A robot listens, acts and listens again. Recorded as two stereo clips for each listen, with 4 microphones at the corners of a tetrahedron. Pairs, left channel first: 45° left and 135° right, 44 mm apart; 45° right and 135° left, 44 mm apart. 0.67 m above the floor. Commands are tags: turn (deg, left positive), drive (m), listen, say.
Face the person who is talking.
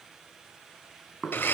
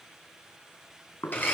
<listen/>
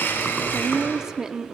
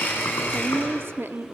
<turn deg="150"/>
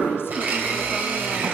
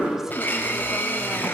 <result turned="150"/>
<listen/>
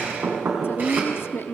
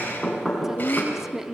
<turn deg="55"/>
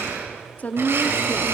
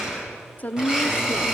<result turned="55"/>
<say>Found it: a woman speaking, straight ahead, under 1 m away.</say>